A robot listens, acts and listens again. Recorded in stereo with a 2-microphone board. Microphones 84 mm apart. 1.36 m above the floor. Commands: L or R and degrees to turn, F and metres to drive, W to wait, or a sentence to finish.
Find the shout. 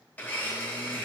W
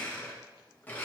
W
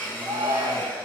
R90
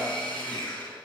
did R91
W
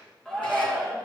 Found it: a shout, straight ahead, 1 to 2 m away.